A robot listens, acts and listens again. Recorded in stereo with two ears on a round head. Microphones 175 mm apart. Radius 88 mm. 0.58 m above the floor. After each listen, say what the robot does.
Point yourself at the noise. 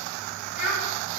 Turn 40° left.
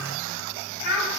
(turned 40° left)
Turn 10° left.
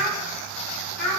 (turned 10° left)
Found it: a child speaking, straight ahead, 2 to 4 m away.